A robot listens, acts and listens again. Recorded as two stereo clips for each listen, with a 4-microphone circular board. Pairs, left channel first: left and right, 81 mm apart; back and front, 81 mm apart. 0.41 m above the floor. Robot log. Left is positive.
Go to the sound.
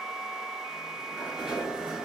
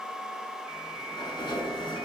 note: The sliding door: 175° right.
cmd yaw -175
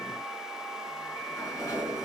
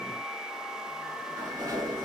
note: The sliding door is now 40° left.
cmd yaw +40
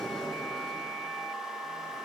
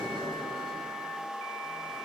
cmd fwd 1.0
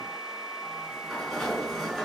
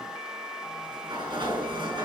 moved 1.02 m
cmd fwd 1.0
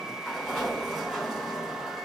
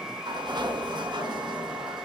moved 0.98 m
cmd fwd 1.0
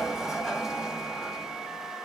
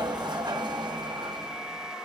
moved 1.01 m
cmd fwd 1.0
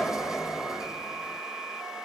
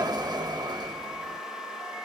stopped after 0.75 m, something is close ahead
note: The sliding door is now 10° right.
cmd yaw -10
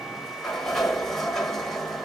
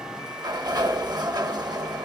end: Arrived at the sliding door, straight ahead.